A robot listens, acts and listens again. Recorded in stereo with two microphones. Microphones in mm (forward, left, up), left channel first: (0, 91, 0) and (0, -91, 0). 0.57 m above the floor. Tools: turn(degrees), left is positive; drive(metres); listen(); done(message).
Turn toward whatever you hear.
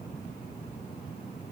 listen()
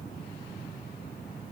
listen()
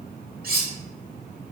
turn(degrees=-55)
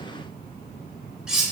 done("Facing the cutlery clinking, under 1 m away.")